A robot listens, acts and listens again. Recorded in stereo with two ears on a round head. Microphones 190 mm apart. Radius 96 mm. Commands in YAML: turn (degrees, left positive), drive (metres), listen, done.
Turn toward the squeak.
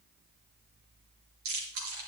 listen: true
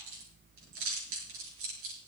listen: true
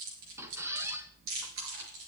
turn: -30
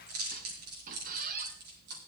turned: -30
turn: -135
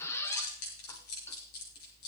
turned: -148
turn: 10
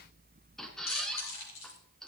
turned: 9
done: "Found it: a squeak, straight ahead, 1 to 2 m away."